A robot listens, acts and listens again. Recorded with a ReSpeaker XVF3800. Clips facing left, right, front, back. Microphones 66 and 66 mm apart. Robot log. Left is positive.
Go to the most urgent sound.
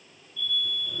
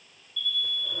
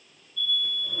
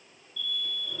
note: The alarm: 155° left.
cmd yaw +155
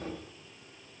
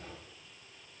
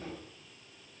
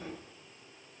cmd idle
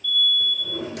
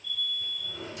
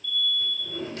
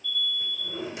note: The alarm is now 30° right.
cmd yaw -30
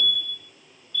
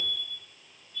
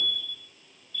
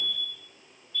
note: The alarm is now 35° right.
cmd yaw -35
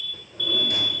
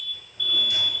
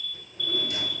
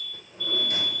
cmd fwd 1.0
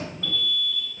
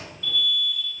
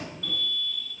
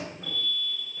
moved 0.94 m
note: The alarm is now 10° right.
cmd yaw -10
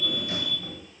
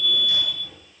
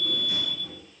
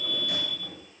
cmd fwd 1.0
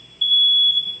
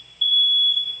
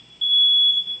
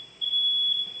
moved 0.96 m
cmd fwd 1.0
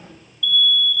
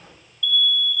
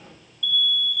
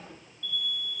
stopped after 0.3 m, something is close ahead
end: Arrived at the alarm, straight ahead.